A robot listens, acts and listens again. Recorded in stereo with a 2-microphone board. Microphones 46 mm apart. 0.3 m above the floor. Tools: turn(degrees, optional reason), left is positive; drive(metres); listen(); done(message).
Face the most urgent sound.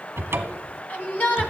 turn(degrees=35, reason="The shout: about 35° left or 145° left.")
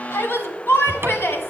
turn(degrees=100, reason="So it is at 100° left.")
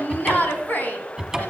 turn(degrees=45, reason="The shout is now 45° left.")
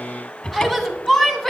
done("Facing the shout.")